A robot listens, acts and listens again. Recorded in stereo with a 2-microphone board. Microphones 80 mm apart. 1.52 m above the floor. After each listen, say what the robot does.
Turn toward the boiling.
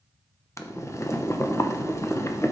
Turn 35° left.
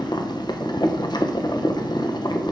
Turn 100° left.
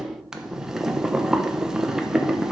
Turn 10° right.
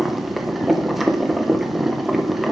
Facing the boiling, under 1 m away.